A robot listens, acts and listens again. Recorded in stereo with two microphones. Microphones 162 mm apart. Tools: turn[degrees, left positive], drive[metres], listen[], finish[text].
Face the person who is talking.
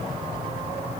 Action: listen[]
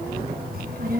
Thought: The child speaking: about 70° right or 110° right.
Action: turn[-70]
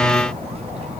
Thought: So it is at 40° right.
Action: turn[-40]
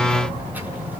Thought: The child speaking is now 10° right.
Action: turn[-10]
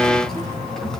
Action: finish[Facing the child speaking, over 4 m away.]